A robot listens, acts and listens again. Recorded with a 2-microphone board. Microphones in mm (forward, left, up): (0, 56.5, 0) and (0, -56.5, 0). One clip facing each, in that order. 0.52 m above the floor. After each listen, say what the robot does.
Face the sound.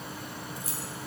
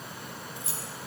Turn 25° right.
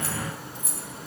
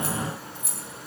Turn 120° right.
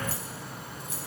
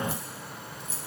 Turn 50° left.
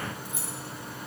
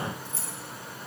Turn 15° left.
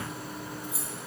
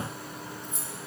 Facing the keys jangling.